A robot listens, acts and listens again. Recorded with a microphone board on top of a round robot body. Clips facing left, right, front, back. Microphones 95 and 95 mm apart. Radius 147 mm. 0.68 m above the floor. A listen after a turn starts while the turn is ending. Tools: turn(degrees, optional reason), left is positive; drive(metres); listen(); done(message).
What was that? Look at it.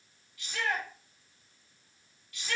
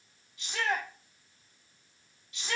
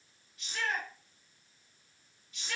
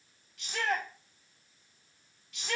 turn(degrees=-160, reason="The shout: 160° right.")
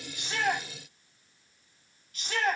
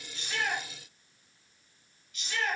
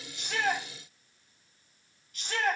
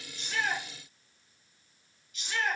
turn(degrees=40, reason="The shout is now 40° left.")
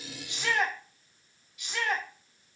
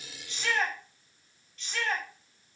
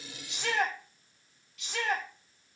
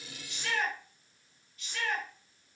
turn(degrees=10, reason="The shout is now 10° left.")
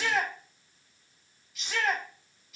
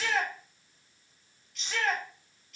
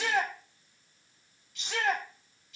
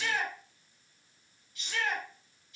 done("Found it: a shout, straight ahead.")